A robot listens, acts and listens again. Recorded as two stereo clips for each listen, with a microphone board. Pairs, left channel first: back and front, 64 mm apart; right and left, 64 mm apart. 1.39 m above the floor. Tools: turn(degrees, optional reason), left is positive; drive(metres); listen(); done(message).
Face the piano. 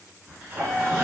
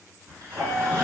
turn(degrees=105, reason="The piano: 105° left.")
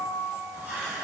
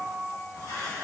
turn(degrees=-20, reason="The piano is now 20° right.")
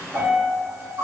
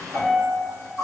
done("Found it: a piano, straight ahead, 1 to 2 m away.")